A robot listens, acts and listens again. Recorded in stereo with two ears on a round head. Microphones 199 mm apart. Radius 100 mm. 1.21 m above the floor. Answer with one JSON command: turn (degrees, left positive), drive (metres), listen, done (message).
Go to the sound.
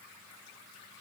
{"listen": true}
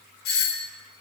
{"turn": 50}
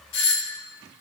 {"turn": 80}
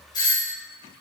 {"turn": 20}
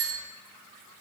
{"drive": 1.0}
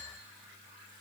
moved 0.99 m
{"listen": true}
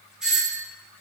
{"drive": 1.0}
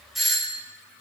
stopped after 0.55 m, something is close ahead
{"done": "Something is in my way. I am facing the doorbell but have not reached it."}